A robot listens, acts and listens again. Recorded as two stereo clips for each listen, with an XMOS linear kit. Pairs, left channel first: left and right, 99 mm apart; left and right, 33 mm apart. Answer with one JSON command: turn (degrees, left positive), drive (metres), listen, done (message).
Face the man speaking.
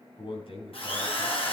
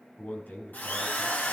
{"turn": 65}
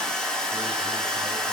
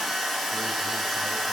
{"listen": true}
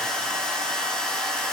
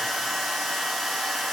{"listen": true}
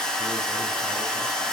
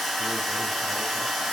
{"done": "I heard a man speaking, but can't make it out now. It was about straight ahead or 50° left."}